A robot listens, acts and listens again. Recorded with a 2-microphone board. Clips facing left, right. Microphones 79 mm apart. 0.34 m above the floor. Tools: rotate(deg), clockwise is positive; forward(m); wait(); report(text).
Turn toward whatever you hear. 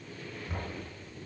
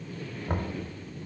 rotate(55)
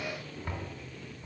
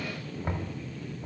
rotate(35)
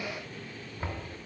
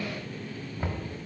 rotate(10)
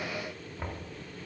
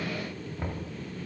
report("Facing the knocking.")